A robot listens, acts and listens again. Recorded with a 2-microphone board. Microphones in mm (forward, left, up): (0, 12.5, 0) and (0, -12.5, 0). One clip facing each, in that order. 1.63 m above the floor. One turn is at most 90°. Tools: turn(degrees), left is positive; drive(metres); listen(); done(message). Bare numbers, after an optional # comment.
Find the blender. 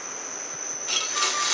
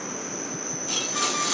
# The blender: about 30° left or 150° left.
turn(30)
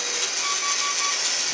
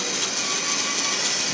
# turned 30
done("Found it: a blender, straight ahead.")